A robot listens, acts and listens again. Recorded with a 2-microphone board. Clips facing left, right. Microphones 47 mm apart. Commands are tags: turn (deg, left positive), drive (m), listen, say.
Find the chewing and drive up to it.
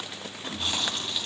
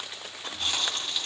<turn deg="30"/>
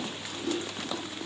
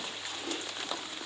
<turn deg="-20"/>
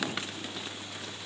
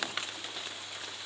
<listen/>
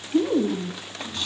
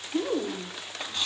<drive m="1.0"/>
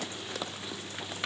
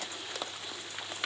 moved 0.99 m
<listen/>
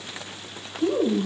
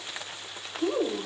<drive m="1.0"/>
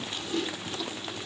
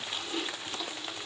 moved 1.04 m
<drive m="1.0"/>
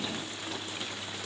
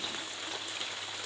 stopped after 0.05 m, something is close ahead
<listen/>
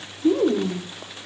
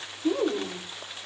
<say>I am next to the chewing.</say>